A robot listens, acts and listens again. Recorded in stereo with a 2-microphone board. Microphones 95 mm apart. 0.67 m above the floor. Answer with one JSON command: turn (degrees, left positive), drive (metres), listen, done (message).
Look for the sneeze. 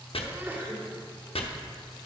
{"turn": -25}
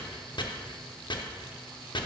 {"listen": true}
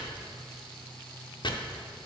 {"done": "I heard a sneeze, but can't make it out now. It was about straight ahead or 130° right."}